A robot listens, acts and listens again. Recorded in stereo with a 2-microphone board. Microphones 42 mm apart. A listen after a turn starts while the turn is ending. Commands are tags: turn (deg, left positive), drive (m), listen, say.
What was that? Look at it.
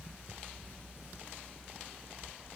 <listen/>
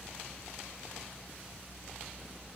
<listen/>
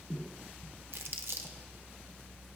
<turn deg="-70"/>
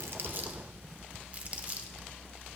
<turn deg="-35"/>
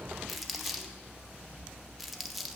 <say>Found it: crumpling, straight ahead.</say>